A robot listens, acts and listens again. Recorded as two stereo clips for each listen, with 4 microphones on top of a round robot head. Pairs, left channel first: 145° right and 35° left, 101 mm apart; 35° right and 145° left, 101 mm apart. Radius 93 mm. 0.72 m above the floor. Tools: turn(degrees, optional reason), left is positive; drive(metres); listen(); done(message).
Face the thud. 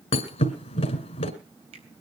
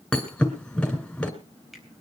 turn(degrees=-120, reason="The thud: 120° right.")
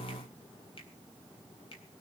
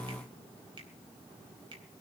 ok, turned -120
done("Facing where the thud came from. I can't hear it now.")